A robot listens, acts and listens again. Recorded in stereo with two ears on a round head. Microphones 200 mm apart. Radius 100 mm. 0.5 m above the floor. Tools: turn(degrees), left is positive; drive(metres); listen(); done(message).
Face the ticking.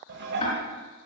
turn(degrees=30)
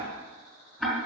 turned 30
done("Facing the ticking, 2 to 4 m away.")